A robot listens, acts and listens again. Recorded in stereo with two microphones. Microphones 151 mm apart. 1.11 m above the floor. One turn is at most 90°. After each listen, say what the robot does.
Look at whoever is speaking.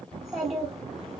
Turn 30° left.
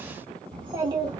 Turn 35° right.
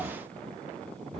Facing the child speaking.